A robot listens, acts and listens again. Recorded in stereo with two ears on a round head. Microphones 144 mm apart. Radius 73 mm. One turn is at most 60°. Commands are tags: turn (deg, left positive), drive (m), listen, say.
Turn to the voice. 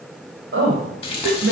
<turn deg="-60"/>
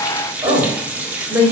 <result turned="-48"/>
<turn deg="-15"/>
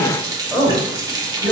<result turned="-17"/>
<turn deg="10"/>
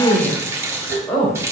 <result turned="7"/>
<turn deg="10"/>
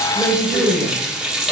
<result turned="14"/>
<say>Facing the woman speaking, 2 to 4 m away.</say>